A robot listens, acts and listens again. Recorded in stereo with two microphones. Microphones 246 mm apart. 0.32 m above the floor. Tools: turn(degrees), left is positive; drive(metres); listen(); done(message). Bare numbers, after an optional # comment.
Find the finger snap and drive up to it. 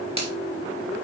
# The finger snap: about 25° right or 155° right.
turn(-25)
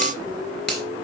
drive(1.0)
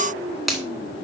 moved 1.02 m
drive(1.0)
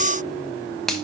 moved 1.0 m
drive(1.0)
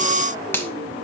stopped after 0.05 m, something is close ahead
# The finger snap is now 10° left.
turn(10)
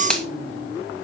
done("I am next to the finger snap.")